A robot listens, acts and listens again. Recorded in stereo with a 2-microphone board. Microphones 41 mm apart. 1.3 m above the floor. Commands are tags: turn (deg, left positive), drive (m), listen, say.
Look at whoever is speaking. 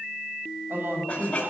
<turn deg="-50"/>
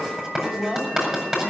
<say>Found it: a woman speaking, straight ahead.</say>